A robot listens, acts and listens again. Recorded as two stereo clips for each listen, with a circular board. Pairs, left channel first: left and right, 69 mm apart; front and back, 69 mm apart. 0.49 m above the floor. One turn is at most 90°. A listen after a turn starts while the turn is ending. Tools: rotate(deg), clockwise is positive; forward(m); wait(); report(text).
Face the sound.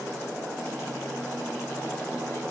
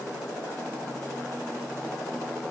wait()
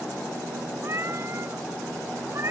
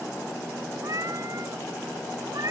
rotate(90)
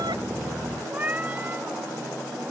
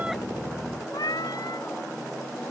rotate(25)
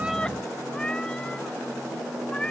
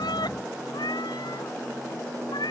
rotate(-10)
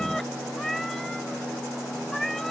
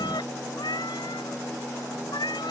report("Found it: a cat meowing, straight ahead.")